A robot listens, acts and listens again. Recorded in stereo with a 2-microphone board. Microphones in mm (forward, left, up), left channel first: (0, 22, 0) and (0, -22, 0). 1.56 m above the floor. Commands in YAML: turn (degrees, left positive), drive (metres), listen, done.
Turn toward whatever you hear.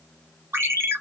turn: -90
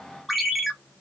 done: "Facing the ringtone, 1 to 2 m away."